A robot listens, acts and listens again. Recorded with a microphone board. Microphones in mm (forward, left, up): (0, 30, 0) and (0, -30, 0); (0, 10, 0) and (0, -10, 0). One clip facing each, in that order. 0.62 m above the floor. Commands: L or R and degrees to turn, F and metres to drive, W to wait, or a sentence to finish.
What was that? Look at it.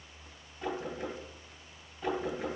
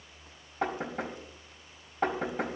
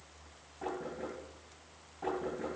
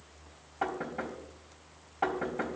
R70
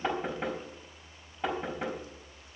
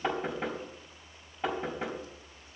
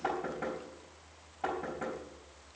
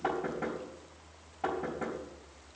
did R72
Found it: knocking, straight ahead.